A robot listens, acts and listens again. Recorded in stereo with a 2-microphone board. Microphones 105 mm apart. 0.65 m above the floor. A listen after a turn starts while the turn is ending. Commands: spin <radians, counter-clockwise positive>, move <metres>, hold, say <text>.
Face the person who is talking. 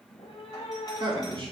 spin -0.87
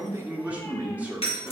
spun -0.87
spin -0.26
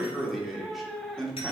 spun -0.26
say Found it: a man speaking, straight ahead.